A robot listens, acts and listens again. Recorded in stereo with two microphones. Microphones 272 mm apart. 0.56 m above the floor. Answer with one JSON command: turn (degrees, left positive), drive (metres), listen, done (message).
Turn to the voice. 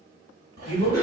{"turn": 25}
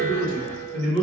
{"turn": 125}
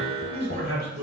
{"turn": -40}
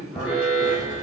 {"listen": true}
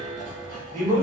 {"turn": 10}
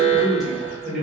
{"done": "Facing the man speaking."}